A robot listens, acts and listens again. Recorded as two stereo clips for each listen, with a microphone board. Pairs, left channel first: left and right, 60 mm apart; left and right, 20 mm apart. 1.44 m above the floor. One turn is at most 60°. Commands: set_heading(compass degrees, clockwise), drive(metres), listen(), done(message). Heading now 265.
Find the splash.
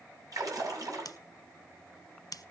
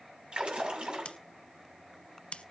set_heading(325)
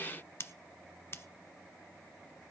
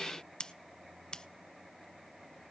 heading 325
listen()
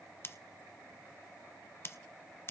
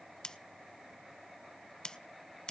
done("I heard a splash, but can't make it out now. It was about 10° right or 50° right.")